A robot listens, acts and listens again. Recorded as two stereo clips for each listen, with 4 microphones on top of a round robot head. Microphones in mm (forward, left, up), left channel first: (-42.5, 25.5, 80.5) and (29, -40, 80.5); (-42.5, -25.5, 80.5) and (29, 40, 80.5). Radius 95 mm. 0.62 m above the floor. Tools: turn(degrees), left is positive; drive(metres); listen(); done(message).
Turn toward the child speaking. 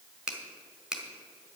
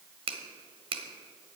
listen()
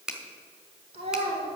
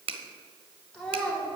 turn(degrees=-55)
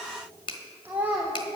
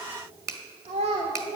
turn(degrees=40)
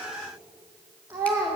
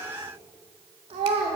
turn(degrees=30)
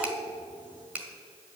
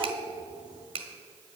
listen()
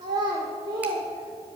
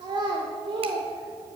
done("Facing the child speaking.")